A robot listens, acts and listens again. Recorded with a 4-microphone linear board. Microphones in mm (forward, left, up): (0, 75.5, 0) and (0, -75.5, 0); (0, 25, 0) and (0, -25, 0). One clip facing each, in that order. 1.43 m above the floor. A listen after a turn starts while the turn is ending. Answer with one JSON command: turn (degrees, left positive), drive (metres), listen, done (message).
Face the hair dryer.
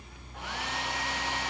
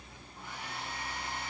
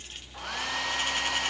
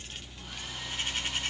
{"turn": 75}
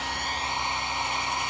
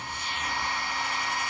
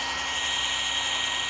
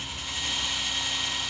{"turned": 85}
{"turn": 20}
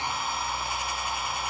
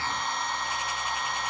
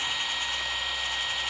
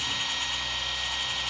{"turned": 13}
{"done": "Found it: a hair dryer, straight ahead, 1 to 2 m away."}